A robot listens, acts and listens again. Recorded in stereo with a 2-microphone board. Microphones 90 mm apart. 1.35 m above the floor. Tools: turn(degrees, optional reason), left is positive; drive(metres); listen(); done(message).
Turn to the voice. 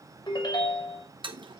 listen()
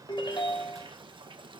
listen()
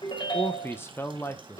turn(degrees=25, reason="The man speaking: about 25° left or 155° left.")
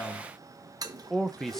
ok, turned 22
done("Facing the man speaking, under 1 m away.")